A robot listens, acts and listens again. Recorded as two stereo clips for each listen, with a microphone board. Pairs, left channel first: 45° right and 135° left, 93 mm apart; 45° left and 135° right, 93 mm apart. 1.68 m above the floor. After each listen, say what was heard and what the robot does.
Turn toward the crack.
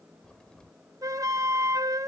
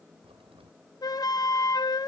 The crack: 125° right. Turn 125° right.
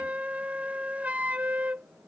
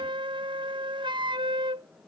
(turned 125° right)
I heard a crack from this way, but can't make it out now.